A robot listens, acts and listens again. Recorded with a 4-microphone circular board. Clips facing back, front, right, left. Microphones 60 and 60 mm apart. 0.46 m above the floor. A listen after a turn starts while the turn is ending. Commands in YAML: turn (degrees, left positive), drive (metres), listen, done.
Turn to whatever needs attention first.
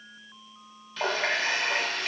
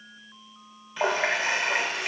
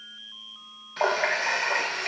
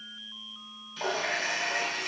listen: true
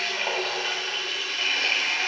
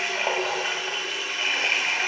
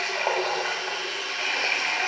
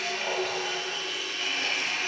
listen: true
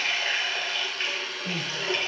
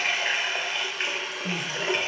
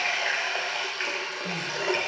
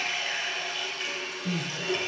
turn: -25
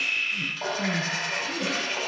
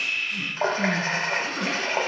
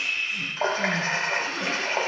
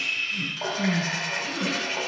done: "Facing the crying."